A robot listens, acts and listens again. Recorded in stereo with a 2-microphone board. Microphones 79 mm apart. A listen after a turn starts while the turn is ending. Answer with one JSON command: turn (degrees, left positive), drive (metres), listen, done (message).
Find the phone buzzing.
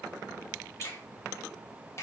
{"listen": true}
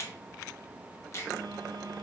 {"turn": -65}
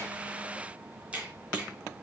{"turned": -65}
{"listen": true}
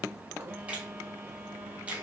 {"turn": -30}
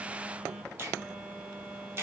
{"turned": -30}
{"turn": -10}
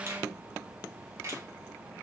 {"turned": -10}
{"listen": true}
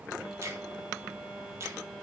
{"done": "Found it: a phone buzzing, straight ahead, 1 to 2 m away."}